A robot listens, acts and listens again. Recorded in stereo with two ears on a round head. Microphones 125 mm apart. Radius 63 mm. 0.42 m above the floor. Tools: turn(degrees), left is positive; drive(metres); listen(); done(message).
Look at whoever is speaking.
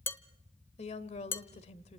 turn(degrees=50)
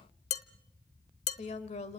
turn(degrees=65)
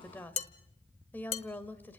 turn(degrees=15)
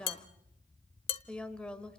turn(degrees=10)
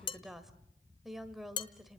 done("Found it: a woman speaking, straight ahead.")